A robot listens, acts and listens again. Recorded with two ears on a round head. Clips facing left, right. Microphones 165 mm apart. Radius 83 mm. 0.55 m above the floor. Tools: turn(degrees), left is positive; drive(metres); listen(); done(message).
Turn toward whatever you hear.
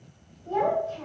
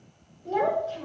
turn(degrees=-35)
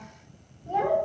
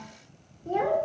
turn(degrees=-40)
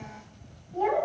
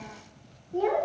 turn(degrees=-40)
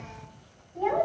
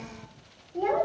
turn(degrees=-125)
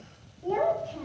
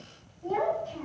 turn(degrees=30)
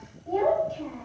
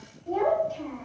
done("Found it: a child speaking, straight ahead, 1 to 2 m away.")